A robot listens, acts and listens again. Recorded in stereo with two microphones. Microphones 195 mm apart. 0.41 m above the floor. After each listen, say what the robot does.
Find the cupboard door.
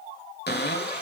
Turn 60° left.
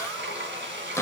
Turn 15° left.
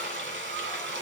Keep listening.
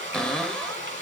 Facing the cupboard door, 1 to 2 m away.